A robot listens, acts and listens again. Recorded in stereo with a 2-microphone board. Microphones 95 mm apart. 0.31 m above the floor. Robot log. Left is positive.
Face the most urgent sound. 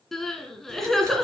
cmd yaw +30
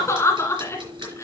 note: So it is at 150° left.
cmd yaw +150
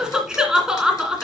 end: Found it: crying, straight ahead, 1 to 2 m away.